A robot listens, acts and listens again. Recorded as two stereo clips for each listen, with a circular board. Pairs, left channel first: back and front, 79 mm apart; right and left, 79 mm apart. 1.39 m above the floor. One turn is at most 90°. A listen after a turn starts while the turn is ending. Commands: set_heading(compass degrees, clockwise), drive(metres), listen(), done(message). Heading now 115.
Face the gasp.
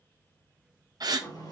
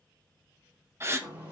set_heading(80)
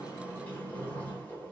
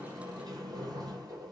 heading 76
done("Facing where the gasp came from. I can't hear it now.")